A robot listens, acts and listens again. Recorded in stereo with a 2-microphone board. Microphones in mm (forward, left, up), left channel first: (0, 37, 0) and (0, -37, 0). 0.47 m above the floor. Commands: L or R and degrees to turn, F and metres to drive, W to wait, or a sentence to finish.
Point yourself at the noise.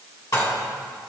L60
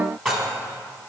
Facing the dishes clattering, 2 to 4 m away.